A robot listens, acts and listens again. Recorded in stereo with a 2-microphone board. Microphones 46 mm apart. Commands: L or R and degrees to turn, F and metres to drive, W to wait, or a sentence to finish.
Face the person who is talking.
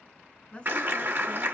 L30
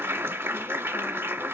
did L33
W
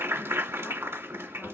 W
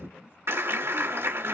I heard a woman speaking, but can't make it out now. It was about straight ahead or 115° left.